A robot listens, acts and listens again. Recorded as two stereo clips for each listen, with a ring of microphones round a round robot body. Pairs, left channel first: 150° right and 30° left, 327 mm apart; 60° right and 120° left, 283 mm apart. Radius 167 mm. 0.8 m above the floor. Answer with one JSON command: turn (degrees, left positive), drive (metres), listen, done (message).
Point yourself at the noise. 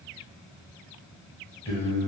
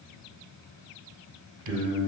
{"turn": 130}
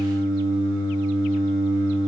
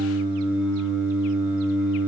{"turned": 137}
{"turn": -10}
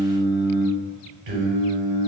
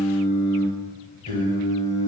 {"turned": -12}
{"done": "Found it: singing, straight ahead."}